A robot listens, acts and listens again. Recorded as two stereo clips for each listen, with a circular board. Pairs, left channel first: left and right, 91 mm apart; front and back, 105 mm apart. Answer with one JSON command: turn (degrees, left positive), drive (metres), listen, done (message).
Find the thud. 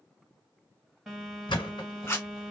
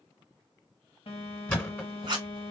{"turn": 75}
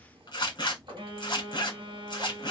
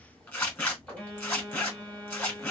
{"done": "Facing where the thud came from. I can't hear it now."}